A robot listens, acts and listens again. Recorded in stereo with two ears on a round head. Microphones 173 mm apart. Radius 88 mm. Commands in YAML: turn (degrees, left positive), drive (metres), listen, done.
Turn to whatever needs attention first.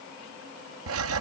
listen: true
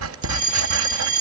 turn: -45
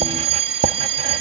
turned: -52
turn: -80
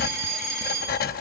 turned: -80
done: "Found it: a fire alarm, straight ahead."